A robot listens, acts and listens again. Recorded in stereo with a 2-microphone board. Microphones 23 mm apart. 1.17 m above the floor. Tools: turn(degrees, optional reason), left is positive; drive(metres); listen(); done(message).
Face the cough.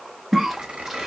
turn(degrees=-30)
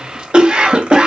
turn(degrees=-135, reason="So it is at 135° right.")
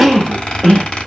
done("Found it: a cough, straight ahead.")